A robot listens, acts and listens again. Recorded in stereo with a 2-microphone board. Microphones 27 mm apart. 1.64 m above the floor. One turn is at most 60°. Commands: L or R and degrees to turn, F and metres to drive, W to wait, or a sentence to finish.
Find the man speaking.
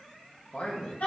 L60
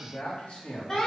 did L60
L50
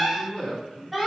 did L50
L25
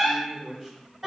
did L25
L10
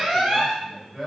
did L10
Facing the man speaking.